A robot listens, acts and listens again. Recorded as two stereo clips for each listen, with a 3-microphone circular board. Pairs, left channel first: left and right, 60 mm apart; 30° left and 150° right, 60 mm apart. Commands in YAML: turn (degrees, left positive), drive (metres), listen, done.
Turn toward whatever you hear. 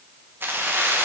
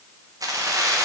turn: -145
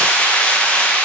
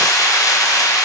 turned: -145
turn: 25
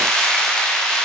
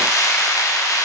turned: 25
turn: 10
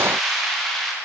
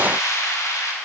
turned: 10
done: "Found it: keys jangling, straight ahead, under 1 m away."